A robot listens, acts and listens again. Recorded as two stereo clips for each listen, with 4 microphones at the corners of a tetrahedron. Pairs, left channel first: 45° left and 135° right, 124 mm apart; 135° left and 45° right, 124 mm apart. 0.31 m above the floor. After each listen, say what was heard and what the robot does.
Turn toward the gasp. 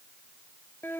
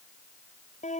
Keep listening.
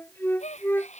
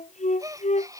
The gasp: 20° left. Turn 20° left.
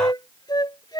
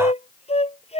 I heard a gasp from this way, but can't make it out now.